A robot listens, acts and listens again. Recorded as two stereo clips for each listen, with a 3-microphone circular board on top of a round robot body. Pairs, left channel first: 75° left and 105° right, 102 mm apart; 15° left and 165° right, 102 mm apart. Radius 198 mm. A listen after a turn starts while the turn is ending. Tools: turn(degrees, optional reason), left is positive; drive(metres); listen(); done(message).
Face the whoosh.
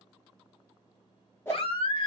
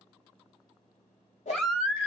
done("Found it: a whoosh, straight ahead.")